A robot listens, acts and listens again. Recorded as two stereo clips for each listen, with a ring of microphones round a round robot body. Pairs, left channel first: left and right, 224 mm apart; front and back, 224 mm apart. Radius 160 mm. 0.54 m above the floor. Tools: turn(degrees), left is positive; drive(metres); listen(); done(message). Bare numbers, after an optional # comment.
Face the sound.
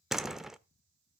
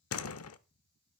done("Facing the door slam, under 1 m away.")